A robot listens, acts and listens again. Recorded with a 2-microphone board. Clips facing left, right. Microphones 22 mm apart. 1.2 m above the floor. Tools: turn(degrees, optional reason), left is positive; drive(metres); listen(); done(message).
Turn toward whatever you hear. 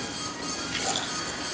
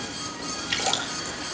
turn(degrees=-90)
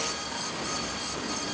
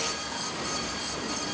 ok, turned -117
turn(degrees=25, reason="Nothing new. It was at 25° left.")
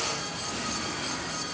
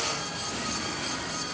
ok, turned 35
turn(degrees=-10, reason="Nothing new. It was at 10° right.")
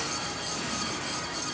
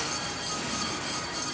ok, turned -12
done("Facing where the splash came from. I can't hear it now.")